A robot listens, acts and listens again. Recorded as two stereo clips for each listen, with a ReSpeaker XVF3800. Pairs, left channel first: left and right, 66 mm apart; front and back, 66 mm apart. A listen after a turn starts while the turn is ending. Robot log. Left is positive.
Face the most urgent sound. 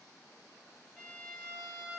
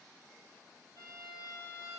cmd idle
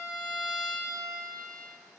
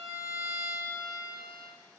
cmd idle
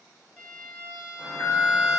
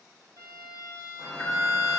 note: The alarm: 60° left.
cmd yaw +60
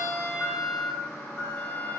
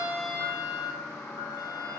note: The alarm is now 35° left.
cmd yaw +35
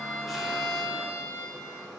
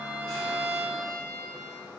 note: The alarm is now 10° right.
cmd yaw -10
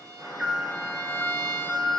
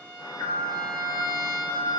end: Facing the alarm.